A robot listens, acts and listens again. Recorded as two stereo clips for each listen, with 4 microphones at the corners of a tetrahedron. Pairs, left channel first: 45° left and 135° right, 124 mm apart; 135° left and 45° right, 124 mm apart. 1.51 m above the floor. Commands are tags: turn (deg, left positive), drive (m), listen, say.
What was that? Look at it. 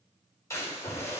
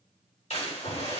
<turn deg="110"/>
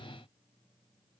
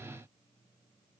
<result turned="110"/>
<say>I heard a splash from this way, but can't make it out now.</say>